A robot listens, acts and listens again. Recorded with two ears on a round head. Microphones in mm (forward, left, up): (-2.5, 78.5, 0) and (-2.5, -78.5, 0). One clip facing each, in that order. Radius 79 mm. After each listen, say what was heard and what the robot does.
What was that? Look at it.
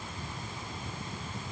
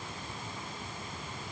Keep listening.
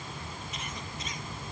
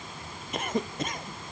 The cough: about 45° right or 135° right. Turn 45° right.
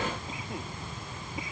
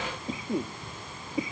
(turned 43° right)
So it is at 90° right. Turn 90° right.
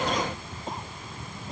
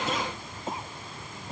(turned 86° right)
Found it: a cough, straight ahead.